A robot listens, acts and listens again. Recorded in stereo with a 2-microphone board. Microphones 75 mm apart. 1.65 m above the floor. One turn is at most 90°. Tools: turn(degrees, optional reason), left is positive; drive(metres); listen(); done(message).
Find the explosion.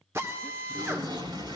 turn(degrees=-90)
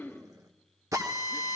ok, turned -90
done("I heard an explosion from this way, but can't make it out now.")